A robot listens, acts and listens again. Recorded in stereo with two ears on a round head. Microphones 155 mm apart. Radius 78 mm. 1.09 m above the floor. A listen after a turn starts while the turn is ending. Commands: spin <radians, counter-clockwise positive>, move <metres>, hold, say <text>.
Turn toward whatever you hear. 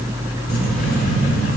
spin 0.87
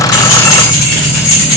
spin 1.57
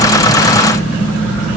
spin 0.17
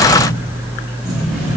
say Facing the keys jangling.